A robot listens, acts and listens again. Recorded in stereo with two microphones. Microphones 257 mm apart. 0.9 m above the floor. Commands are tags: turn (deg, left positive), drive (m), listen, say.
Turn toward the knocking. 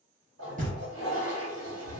<turn deg="-30"/>
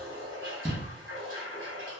<say>Facing the knocking.</say>